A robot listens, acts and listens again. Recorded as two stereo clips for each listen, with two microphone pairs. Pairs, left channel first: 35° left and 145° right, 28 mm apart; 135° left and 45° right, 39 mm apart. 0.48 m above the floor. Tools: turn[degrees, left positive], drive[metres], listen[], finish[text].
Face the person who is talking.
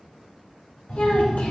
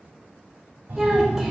Thought: The child speaking: 40° left.
Action: turn[40]
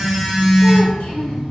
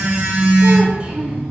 Action: listen[]
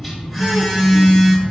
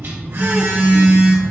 Action: listen[]
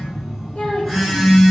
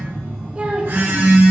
Thought: The child speaking is now 10° left.
Action: turn[10]
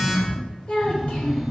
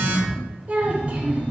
Action: finish[Found it: a child speaking, straight ahead.]